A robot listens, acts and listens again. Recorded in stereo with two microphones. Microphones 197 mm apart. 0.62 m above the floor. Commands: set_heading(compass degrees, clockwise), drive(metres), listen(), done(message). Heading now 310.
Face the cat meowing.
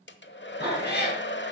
set_heading(250)
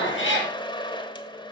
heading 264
set_heading(189)
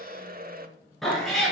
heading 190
done("Found it: a cat meowing, straight ahead.")